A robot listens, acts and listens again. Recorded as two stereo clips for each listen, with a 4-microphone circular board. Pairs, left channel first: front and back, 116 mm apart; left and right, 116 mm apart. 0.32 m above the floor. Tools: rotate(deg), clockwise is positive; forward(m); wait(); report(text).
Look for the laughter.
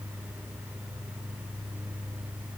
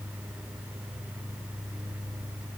wait()
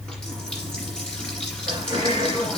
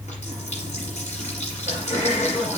rotate(-125)
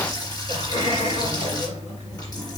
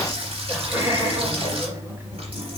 rotate(20)
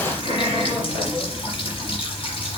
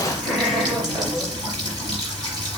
report("Found it: laughter, straight ahead.")